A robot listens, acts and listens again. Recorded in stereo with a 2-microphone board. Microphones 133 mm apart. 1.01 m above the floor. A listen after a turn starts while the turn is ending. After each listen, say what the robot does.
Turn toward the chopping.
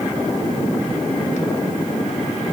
Keep listening.
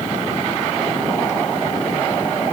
Keep listening.
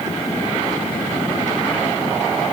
I can't make out chopping to turn to.